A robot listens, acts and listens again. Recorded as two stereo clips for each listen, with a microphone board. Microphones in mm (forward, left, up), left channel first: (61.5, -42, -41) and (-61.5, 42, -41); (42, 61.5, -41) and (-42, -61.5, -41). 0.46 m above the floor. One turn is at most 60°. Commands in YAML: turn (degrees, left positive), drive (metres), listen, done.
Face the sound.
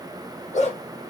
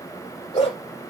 done: "Facing the dog barking."